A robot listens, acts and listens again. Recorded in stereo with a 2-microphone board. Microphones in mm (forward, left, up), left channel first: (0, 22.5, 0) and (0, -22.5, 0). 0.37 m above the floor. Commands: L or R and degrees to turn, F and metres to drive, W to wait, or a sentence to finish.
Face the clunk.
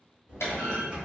L90
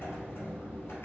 Facing where the clunk came from. I can't hear it now.